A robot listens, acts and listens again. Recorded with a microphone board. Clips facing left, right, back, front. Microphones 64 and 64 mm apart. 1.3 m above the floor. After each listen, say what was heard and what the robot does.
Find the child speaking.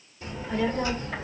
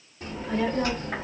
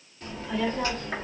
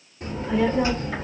The child speaking: 70° right. Turn 70° right.
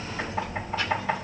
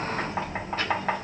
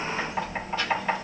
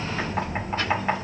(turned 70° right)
The child speaking is now 50° right. Turn 50° right.
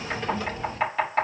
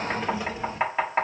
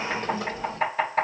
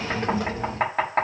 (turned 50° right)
The child speaking is now 15° right. Turn 15° right.
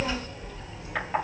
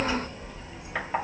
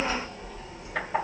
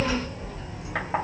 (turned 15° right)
The child speaking is now 10° right. Turn 10° right.
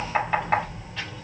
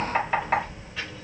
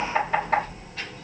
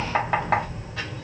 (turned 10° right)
Facing the child speaking.